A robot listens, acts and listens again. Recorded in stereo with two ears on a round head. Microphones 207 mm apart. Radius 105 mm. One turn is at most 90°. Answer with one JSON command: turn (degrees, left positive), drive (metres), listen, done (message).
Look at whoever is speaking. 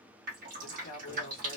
{"turn": 60}
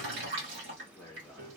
{"turn": 10}
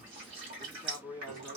{"done": "Facing the man speaking."}